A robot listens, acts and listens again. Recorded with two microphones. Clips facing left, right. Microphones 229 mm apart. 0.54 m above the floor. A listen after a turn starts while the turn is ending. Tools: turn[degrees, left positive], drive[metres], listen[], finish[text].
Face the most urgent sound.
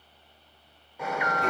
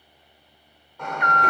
Action: turn[30]
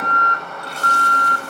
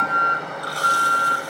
Thought: So it is at 20° right.
Action: turn[-20]
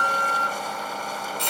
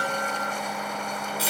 Action: finish[Facing the alarm.]